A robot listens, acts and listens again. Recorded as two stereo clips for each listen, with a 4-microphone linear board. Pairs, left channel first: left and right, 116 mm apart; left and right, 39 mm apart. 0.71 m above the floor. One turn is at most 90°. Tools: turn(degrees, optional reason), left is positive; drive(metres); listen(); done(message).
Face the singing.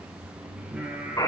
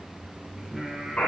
turn(degrees=-30)
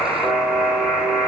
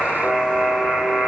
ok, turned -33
listen()
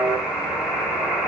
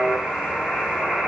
listen()
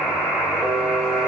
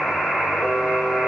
done("I heard singing, but can't make it out now. It was about 20° left or 135° right.")